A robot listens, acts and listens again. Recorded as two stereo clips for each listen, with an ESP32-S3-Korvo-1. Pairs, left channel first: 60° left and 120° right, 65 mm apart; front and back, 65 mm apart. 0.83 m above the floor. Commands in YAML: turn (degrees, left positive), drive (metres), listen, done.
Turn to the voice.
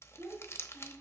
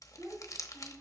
turn: 165
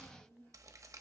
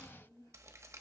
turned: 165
done: "Facing the child speaking, over 4 m away."